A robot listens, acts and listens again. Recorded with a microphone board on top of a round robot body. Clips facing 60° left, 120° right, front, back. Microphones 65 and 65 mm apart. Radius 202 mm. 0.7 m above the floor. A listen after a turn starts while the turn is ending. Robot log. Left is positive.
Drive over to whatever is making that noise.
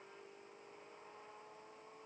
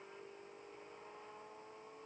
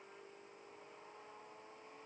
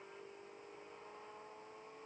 cmd idle
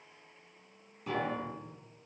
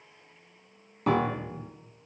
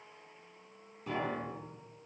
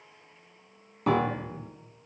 note: The piano: 150° right.
cmd yaw -150
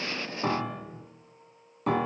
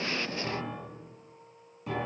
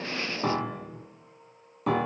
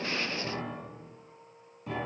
note: The piano is now 25° left.
cmd yaw +25
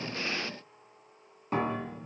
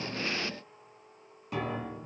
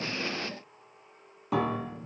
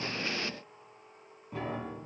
cmd fwd 1.0
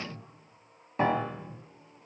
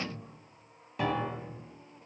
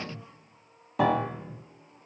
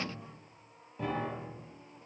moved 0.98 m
cmd fwd 1.0
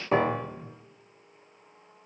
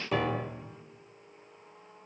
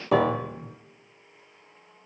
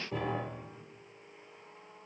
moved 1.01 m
cmd fwd 1.0
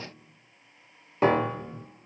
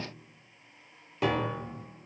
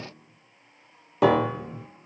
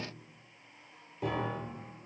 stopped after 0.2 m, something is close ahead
end: I am next to the piano.